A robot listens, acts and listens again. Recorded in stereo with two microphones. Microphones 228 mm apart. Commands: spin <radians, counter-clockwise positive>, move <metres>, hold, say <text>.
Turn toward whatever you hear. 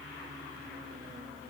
hold
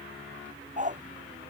spin -0.61
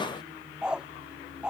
say Facing the dog barking.